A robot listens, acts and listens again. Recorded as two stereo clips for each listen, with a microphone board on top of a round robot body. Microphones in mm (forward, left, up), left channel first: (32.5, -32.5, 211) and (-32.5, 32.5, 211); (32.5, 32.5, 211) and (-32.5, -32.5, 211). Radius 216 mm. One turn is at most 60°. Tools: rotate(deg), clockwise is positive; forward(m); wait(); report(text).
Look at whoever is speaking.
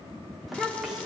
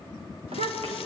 rotate(60)
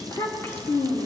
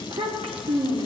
rotate(60)
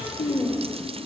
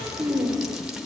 rotate(60)
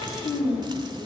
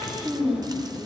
rotate(50)
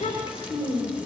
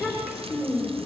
rotate(15)
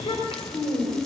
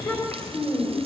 report("Facing the child speaking, 2 to 4 m away.")